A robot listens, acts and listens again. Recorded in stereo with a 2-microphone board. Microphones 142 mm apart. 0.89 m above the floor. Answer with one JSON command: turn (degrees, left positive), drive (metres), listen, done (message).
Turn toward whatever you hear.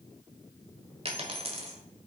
{"turn": -45}
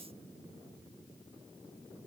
{"listen": true}
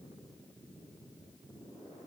{"done": "I heard a dropped coin, but can't make it out now. It was about straight ahead or 90° right."}